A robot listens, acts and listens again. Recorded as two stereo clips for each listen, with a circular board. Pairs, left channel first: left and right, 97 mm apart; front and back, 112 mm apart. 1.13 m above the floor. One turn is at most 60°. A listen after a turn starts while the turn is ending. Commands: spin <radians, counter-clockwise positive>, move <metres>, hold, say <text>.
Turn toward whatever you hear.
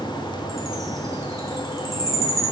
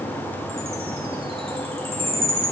spin -1.05
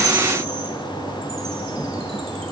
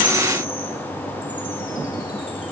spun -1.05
spin -1.05
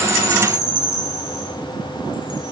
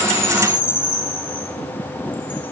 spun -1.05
spin -0.79
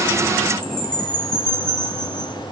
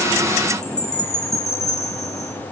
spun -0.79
spin 0.17
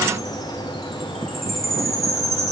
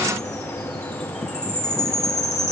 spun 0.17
say Found it: a chime, straight ahead, 1 to 2 m away.